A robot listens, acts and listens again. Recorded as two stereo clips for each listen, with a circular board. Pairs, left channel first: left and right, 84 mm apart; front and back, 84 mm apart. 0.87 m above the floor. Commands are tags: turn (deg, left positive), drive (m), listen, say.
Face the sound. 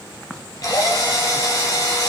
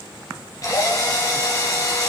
<turn deg="50"/>
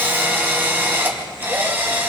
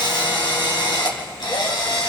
<turn deg="-25"/>
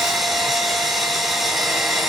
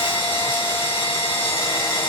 <say>Facing the drill, over 4 m away.</say>